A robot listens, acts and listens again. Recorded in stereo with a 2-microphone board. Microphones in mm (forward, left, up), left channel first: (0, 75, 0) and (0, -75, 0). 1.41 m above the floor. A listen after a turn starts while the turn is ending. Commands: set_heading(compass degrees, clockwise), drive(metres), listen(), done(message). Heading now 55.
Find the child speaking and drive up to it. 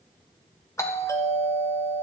listen()
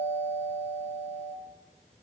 listen()
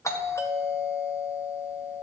done("I can't make out a child speaking to turn to.")